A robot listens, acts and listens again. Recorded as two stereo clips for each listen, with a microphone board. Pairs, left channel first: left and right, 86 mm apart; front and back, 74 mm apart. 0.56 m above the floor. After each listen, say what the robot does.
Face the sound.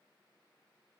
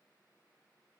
Keep listening.
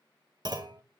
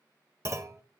Turn 130° right.
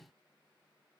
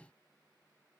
Facing where the clunk came from. I can't hear it now.